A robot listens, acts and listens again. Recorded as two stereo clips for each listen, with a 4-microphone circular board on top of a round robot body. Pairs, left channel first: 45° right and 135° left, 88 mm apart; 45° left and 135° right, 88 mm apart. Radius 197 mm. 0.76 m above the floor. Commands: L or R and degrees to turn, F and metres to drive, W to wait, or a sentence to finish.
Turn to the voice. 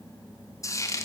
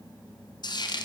W
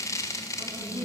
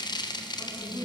L100
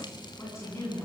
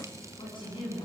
L15
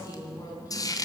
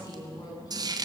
Found it: a woman speaking, straight ahead, over 4 m away.